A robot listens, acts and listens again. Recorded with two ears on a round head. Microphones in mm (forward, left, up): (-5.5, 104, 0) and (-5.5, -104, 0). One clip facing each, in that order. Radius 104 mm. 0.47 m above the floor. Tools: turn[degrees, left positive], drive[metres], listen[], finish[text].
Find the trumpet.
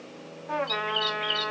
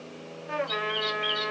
Action: turn[-30]
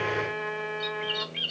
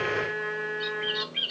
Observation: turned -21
Thought: So it is at 10° left.
Action: turn[10]
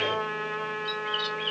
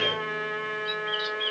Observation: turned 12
Action: finish[Facing the trumpet, 2 to 4 m away.]